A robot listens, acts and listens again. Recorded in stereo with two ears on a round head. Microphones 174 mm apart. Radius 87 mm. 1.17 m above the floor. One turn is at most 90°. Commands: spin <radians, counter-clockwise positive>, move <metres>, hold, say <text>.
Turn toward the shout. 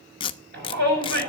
spin -0.96
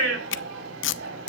spin -1.22
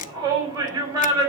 spin -0.35
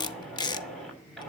hold
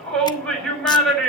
say Found it: a shout, straight ahead, over 4 m away.